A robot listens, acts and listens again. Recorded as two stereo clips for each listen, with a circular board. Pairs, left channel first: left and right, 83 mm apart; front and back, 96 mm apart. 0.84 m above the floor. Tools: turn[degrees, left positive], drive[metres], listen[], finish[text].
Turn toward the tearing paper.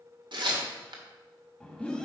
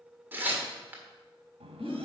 Thought: The tearing paper: 110° right.
Action: turn[-110]
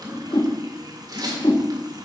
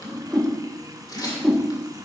Thought: The tearing paper is now 50° right.
Action: turn[-50]
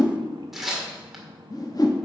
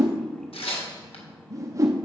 Action: finish[Facing the tearing paper.]